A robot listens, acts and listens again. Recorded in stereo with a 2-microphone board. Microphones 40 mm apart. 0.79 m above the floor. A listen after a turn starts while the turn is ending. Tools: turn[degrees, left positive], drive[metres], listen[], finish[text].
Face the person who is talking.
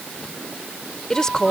Thought: The woman speaking: about 15° left or 165° left.
Action: turn[15]
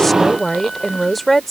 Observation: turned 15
Action: finish[Found it: a woman speaking, straight ahead.]